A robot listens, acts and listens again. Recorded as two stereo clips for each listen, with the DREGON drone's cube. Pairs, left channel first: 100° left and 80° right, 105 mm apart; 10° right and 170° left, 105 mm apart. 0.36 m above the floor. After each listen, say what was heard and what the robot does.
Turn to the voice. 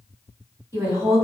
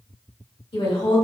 The woman speaking: 25° right. Turn 25° right.
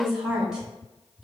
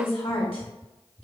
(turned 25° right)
Found it: a woman speaking, straight ahead.